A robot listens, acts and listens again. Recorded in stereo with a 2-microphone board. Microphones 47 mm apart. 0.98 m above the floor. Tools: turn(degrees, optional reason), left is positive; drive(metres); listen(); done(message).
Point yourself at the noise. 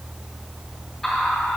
turn(degrees=30)
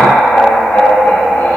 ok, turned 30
turn(degrees=115, reason="So it is at 115° left.")
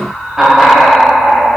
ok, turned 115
turn(degrees=-15, reason="The laughter is now 15° right.")
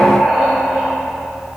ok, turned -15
done("Facing the laughter.")